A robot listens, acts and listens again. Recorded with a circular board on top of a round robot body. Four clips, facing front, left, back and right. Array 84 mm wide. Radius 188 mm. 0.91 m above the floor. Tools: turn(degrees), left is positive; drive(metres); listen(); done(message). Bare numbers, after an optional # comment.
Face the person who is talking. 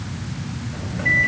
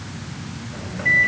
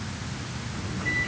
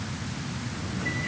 listen()
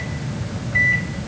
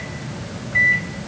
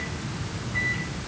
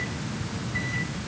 listen()
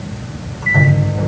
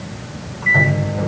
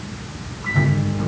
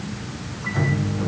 done("I can't make out anyone speaking, only a microwave.")